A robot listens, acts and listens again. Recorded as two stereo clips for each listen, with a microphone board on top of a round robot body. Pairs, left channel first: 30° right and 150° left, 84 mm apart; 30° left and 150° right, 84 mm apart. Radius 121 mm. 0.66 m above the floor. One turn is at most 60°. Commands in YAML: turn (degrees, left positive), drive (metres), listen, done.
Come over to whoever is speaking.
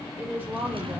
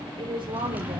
turn: -60
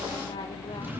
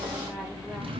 turn: -60
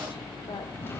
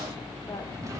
turn: -25
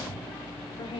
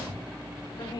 turn: -10
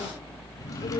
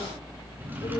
listen: true
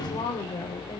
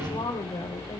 drive: 1.0
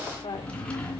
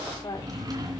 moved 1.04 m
drive: 1.0
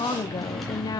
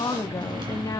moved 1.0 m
drive: 1.0
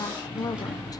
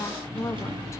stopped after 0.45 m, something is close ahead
turn: -10
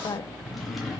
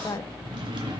done: "Arrived at the woman speaking, straight ahead."